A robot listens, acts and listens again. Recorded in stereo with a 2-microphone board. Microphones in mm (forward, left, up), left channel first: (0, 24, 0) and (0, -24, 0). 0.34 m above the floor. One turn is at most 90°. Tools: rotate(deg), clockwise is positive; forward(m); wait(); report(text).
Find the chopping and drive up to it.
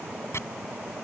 rotate(-65)
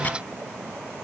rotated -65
wait()
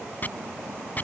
rotate(-40)
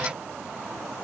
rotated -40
wait()
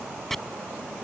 forward(1.0)
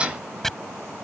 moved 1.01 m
rotate(-10)
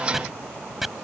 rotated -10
forward(1.0)
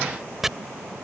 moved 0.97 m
rotate(10)
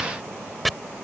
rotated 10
forward(1.0)
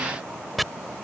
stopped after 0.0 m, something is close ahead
report("I am next to the chopping.")